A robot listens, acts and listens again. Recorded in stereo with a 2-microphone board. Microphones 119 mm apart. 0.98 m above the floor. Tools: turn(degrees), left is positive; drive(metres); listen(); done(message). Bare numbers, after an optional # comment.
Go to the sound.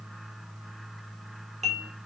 # The dishes clattering: about 70° right or 110° right.
turn(-70)
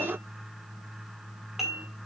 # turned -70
drive(1.0)
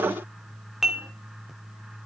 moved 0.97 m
drive(1.0)
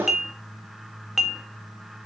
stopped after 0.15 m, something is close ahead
done("I am next to the dishes clattering.")